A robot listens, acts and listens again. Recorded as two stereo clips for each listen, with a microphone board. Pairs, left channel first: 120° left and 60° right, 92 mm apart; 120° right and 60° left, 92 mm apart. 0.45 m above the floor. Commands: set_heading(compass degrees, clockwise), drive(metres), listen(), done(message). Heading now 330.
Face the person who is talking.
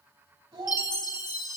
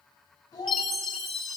set_heading(45)
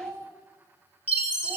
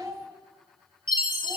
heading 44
done("Facing the child speaking.")